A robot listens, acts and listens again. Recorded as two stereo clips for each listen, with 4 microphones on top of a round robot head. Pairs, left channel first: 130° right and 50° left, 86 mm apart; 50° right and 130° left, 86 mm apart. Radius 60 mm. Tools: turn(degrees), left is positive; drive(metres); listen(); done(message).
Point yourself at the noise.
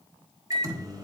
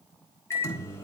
done("Found it: a microwave, straight ahead, 1 to 2 m away.")